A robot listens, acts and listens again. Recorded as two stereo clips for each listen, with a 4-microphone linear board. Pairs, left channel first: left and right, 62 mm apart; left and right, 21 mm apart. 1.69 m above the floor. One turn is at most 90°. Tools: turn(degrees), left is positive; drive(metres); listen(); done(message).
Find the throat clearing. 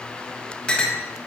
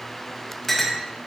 listen()
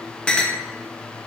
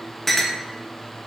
listen()
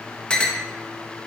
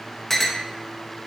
done("I can't make out throat clearing to turn to.")